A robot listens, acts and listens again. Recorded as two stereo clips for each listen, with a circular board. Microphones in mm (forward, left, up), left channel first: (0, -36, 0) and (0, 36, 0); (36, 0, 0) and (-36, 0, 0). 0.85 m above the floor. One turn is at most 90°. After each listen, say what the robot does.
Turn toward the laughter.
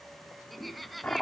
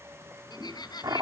Found it: laughter, straight ahead.